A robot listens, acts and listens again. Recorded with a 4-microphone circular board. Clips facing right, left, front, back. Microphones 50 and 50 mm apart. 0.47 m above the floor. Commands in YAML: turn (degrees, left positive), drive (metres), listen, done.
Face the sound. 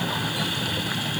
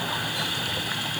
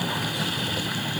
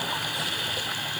listen: true
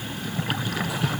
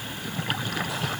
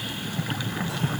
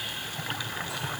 listen: true
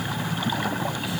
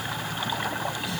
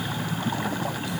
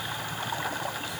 done: "I can't make out anything to turn to."